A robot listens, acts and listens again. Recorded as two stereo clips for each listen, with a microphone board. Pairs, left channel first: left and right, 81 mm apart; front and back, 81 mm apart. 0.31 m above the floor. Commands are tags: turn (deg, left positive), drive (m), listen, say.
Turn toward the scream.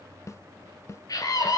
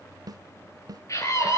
<turn deg="50"/>
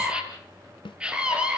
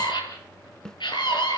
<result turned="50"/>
<turn deg="-15"/>
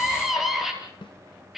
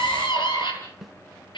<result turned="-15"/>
<say>Found it: a scream, straight ahead, over 4 m away.</say>